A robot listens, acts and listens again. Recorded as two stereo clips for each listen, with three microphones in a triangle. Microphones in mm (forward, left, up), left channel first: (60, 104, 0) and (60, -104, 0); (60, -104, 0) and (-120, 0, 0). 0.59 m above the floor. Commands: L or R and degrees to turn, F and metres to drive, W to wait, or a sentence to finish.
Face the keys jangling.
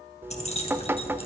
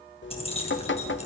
L30
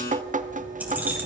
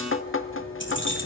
R10
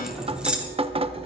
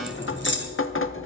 Found it: keys jangling, straight ahead.